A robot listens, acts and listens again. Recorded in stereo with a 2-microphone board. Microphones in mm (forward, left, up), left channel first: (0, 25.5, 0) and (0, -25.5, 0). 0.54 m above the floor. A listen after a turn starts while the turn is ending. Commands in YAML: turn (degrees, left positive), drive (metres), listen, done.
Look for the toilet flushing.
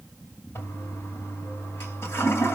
turn: 55
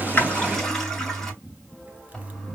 turn: 10
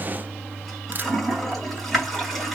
done: "Found it: a toilet flushing, straight ahead, 2 to 4 m away."